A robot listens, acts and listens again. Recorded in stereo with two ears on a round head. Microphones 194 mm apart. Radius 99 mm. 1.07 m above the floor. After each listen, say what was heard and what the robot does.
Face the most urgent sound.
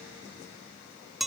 Keep listening.
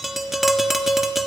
Keep listening.
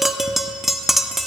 I can't make out anything urgent, only tapping.